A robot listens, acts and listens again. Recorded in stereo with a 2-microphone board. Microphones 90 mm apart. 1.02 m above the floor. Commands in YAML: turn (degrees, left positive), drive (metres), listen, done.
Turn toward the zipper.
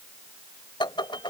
listen: true
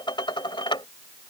listen: true
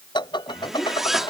turn: -30
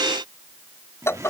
turn: -145
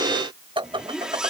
turn: -10
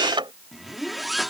done: "Facing the zipper."